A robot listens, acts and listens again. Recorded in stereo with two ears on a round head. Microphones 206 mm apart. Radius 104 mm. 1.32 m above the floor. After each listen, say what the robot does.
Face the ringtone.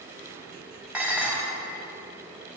Keep listening.
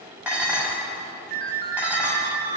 Turn 40° right.
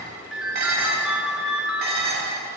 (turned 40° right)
Found it: a ringtone, straight ahead.